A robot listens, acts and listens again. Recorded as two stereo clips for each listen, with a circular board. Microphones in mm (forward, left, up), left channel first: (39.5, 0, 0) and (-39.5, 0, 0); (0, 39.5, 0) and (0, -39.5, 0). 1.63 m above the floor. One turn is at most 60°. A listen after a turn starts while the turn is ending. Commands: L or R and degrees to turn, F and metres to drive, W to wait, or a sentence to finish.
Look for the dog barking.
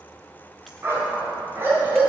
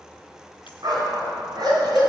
R60
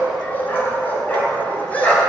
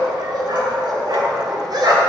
R60
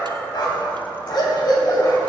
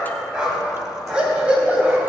R20
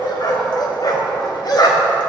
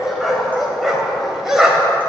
Found it: a dog barking, straight ahead, 2 to 4 m away.